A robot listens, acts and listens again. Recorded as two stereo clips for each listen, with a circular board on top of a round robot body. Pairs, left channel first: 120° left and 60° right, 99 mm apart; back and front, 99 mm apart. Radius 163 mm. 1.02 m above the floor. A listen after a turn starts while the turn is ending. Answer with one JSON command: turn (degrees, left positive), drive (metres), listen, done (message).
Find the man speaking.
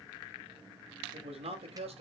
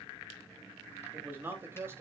{"turn": -65}
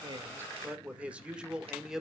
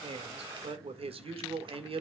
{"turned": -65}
{"turn": 25}
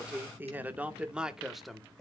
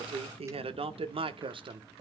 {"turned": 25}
{"turn": 35}
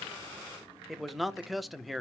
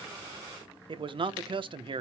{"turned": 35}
{"turn": 30}
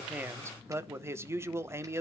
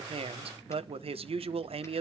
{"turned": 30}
{"done": "Facing the man speaking."}